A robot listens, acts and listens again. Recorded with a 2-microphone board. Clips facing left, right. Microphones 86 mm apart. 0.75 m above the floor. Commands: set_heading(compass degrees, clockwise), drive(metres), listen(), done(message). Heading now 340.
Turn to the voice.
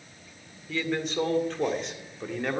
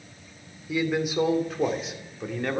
set_heading(310)
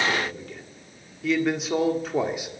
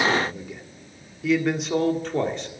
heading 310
set_heading(280)
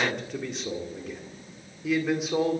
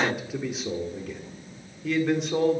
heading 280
set_heading(250)
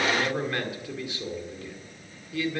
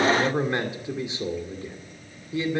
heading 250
set_heading(275)
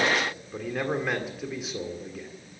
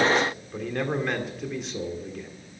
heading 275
done("Found it: a man speaking, straight ahead, 2 to 4 m away.")